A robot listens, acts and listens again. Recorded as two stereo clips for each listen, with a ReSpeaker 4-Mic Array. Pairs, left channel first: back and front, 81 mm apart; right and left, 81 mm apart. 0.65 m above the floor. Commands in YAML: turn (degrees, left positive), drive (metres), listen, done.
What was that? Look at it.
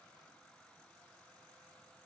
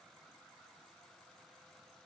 listen: true
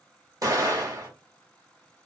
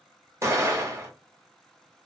turn: 40
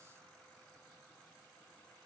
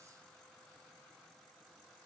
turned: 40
done: "Facing where the explosion came from. I can't hear it now."